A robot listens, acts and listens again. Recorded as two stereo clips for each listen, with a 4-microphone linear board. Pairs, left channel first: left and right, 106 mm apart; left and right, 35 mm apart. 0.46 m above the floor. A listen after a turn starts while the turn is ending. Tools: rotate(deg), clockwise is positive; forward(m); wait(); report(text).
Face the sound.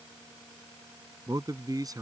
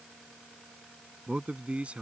rotate(35)
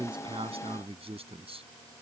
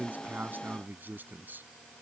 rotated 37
rotate(115)
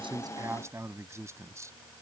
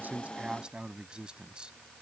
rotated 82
rotate(30)
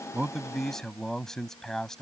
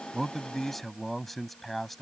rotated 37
report("Found it: a man speaking, straight ahead.")